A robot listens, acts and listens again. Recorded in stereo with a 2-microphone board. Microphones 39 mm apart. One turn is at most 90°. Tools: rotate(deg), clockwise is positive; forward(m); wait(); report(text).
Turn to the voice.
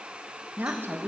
rotate(70)
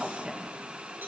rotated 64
rotate(20)
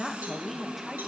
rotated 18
report("Found it: a woman speaking, straight ahead.")